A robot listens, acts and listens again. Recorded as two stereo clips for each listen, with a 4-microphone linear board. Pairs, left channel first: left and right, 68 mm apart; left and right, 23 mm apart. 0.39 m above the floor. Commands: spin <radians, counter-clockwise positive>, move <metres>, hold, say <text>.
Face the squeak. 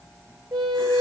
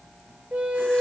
spin -1.57
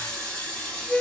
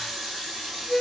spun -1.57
say Facing the squeak.